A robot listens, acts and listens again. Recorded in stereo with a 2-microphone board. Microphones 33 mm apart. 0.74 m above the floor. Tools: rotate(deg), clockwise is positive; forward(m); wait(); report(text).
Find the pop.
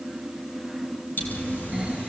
rotate(-90)
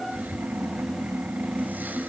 report("I heard a pop from this way, but can't make it out now.")